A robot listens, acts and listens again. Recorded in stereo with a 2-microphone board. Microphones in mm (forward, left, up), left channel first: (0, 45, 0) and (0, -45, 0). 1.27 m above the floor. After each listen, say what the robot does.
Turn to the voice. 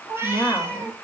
Turn 30° left.
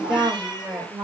Turn 20° right.
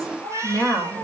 Facing the woman speaking.